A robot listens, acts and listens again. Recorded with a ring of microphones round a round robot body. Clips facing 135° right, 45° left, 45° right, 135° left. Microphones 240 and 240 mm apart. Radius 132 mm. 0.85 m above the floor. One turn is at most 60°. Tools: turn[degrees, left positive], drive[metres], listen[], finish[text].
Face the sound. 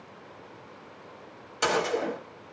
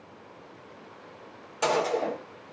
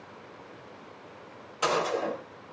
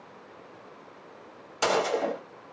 Thought: The gunshot: 155° left.
Action: turn[60]
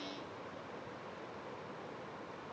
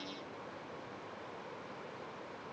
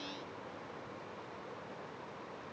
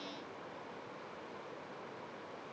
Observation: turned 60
Thought: Nothing new. It was at 95° left.
Action: turn[60]
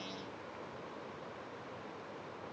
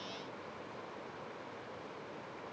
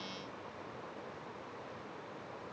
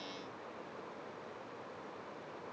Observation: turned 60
Thought: Nothing new. It was at 35° left.
Action: turn[35]
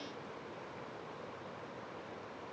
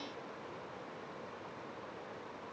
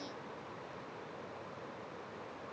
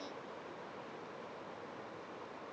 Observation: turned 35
Action: finish[Facing where the gunshot came from. I can't hear it now.]